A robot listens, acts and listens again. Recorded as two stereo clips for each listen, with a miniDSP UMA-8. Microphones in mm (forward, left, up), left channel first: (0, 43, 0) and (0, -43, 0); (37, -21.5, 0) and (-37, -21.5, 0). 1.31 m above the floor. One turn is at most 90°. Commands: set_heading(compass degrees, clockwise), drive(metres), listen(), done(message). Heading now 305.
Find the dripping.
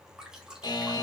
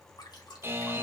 set_heading(315)
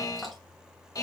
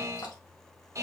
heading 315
done("Found it: dripping, straight ahead.")